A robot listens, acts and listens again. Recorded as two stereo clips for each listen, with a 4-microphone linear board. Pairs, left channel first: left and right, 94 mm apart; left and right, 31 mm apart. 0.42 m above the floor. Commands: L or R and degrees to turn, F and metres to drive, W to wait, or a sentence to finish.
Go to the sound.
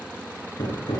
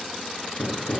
L65
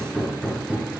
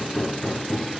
F1.0
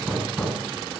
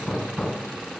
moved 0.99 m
F1.0
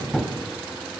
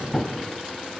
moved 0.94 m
F1.0
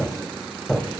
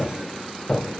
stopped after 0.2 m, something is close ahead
I am next to the hammering.